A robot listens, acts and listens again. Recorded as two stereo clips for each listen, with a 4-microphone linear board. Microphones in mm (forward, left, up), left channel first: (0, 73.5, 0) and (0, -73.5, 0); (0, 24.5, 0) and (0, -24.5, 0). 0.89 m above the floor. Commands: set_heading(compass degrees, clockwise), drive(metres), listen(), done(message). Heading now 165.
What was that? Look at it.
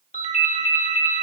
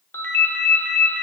set_heading(110)
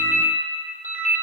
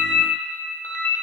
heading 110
set_heading(40)
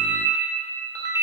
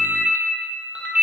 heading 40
set_heading(65)
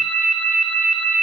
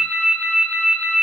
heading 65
done("Found it: a ringtone, straight ahead, 1 to 2 m away.")